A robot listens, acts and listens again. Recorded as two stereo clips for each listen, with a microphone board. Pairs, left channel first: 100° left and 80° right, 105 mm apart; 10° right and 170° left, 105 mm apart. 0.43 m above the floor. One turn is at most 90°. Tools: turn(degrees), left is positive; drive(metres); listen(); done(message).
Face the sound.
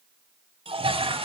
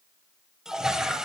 turn(degrees=-90)
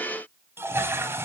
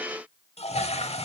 turn(degrees=-10)
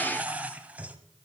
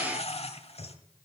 done("Facing the toilet flushing, under 1 m away.")